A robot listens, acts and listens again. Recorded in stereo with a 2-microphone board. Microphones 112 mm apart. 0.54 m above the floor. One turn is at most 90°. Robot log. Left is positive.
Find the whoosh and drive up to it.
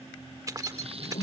note: The whoosh: about 75° left or 105° left.
cmd yaw +75
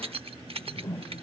note: So it is at 30° left.
cmd yaw +30
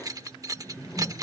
cmd fwd 1.0
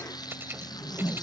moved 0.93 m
cmd fwd 1.0
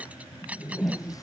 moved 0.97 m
cmd fwd 1.0
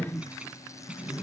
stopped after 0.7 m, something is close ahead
end: Arrived at the whoosh, straight ahead.